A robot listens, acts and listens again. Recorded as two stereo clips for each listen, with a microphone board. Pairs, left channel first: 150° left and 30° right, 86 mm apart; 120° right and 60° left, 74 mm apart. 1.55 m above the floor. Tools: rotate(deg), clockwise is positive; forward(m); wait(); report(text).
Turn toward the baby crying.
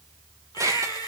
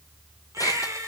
rotate(-110)
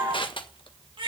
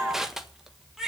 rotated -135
rotate(25)
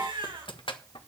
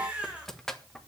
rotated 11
rotate(15)
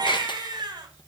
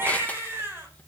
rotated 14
report("Found it: a baby crying, straight ahead.")